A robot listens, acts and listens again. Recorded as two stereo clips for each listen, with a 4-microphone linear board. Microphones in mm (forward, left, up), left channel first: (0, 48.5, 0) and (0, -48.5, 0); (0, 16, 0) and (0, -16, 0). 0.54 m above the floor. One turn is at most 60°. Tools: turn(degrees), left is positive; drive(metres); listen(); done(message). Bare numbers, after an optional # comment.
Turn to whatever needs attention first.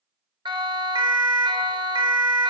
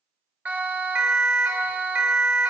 # The siren: about 55° right or 125° right.
turn(-55)
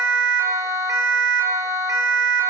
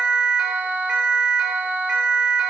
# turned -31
# So it is at 35° right.
turn(-35)
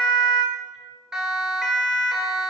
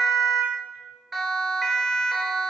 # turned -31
done("Found it: a siren, straight ahead, 2 to 4 m away.")